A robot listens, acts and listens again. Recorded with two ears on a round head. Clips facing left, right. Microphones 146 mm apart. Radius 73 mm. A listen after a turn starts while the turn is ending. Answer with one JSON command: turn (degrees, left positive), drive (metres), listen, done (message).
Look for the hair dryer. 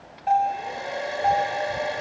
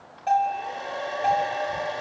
{"turn": 15}
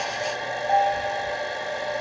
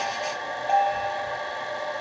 {"turn": 150}
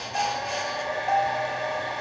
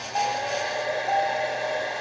{"turn": -45}
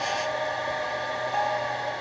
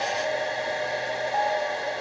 {"turn": -35}
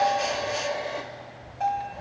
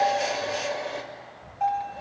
{"done": "Facing the hair dryer, 2 to 4 m away."}